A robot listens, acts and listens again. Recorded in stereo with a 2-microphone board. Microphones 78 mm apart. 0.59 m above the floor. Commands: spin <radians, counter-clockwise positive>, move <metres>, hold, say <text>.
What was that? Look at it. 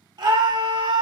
spin -1.13
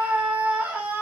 spin -0.35
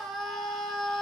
say Found it: a scream, straight ahead.